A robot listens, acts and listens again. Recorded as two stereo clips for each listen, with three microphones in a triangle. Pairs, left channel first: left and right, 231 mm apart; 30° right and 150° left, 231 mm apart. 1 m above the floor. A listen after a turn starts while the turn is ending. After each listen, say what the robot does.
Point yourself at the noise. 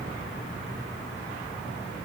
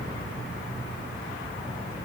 Keep listening.
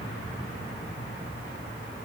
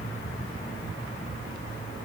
Keep listening.
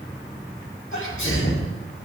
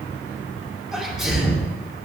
Turn 60° left.
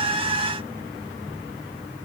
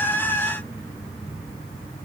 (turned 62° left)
Facing where the sneeze came from. I can't hear it now.